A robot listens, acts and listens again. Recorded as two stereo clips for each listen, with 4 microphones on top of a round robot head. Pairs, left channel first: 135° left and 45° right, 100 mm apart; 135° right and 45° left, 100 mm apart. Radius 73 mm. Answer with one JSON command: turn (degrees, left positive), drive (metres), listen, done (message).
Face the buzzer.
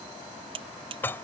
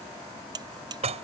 {"done": "Facing the buzzer."}